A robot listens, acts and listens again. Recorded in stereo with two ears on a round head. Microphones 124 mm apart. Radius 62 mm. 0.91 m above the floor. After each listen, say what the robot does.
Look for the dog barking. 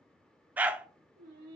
Turn 30° right.
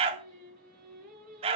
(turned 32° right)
Turn 135° right.
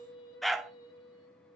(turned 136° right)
Facing the dog barking, under 1 m away.